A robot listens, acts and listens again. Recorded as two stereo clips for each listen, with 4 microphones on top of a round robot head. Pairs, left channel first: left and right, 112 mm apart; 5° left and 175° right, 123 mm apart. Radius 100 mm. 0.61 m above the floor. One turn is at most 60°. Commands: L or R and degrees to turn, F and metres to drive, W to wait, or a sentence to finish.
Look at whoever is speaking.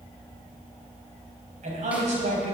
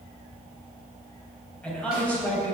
R60
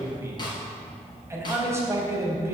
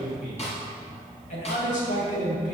R25
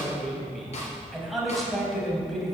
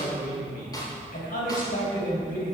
Found it: a man speaking, straight ahead, 2 to 4 m away.